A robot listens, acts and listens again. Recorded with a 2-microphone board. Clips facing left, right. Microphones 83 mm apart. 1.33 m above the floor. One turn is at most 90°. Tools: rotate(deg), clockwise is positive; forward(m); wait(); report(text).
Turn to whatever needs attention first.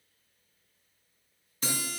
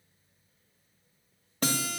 wait()
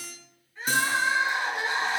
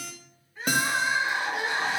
rotate(30)
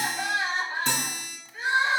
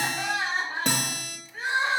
rotate(90)
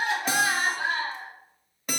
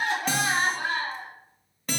rotate(60)
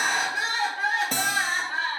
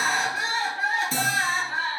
report("Facing the crying, 2 to 4 m away.")